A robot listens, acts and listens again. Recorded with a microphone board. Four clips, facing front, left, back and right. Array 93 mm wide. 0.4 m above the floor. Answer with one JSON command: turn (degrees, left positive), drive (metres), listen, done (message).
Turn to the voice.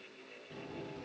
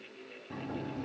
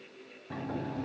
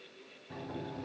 {"listen": true}
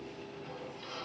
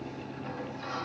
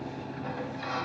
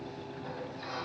{"listen": true}
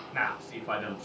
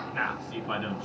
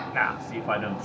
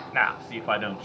{"turn": -115}
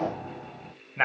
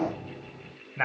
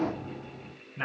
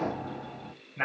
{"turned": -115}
{"turn": 20}
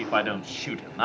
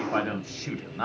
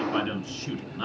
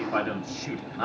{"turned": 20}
{"done": "Facing the man speaking."}